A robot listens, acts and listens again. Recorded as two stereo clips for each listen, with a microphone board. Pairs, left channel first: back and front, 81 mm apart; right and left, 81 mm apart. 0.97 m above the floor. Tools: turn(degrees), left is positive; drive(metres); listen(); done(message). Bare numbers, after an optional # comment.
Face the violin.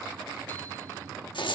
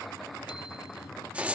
listen()
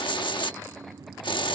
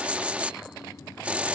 listen()
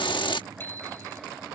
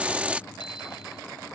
done("I can't make out a violin, only a hiss and a bicycle bell.")